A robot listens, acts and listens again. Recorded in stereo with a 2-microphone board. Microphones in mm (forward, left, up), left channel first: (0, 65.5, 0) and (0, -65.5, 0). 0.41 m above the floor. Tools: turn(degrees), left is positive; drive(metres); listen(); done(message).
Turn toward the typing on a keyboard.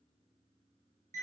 listen()
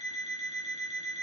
listen()
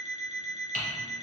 turn(degrees=-75)
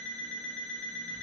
listen()
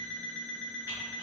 listen()
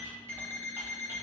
done("I heard typing on a keyboard, but can't make it out now. It was about straight ahead or 30° right.")